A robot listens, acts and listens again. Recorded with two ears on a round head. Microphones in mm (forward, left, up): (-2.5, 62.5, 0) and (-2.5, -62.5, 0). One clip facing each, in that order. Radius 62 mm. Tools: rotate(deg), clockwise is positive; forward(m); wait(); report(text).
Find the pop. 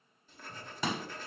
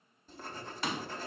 rotate(-90)
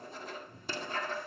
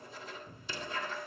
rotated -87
report("Facing where the pop came from. I can't hear it now.")